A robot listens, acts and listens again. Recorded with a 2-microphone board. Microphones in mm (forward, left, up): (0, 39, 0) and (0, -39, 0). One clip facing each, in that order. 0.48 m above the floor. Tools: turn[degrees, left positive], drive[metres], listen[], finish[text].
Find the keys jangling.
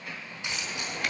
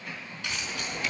Thought: The keys jangling: about 20° left or 160° left.
Action: turn[20]
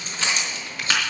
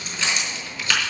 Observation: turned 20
Thought: The keys jangling: about 30° left or 150° left.
Action: turn[30]
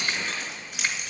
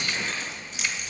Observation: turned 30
Thought: So it is at 120° left.
Action: turn[120]
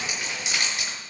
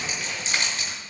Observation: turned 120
Thought: The keys jangling is now 15° left.
Action: turn[15]
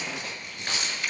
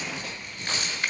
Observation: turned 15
Action: finish[Facing the keys jangling.]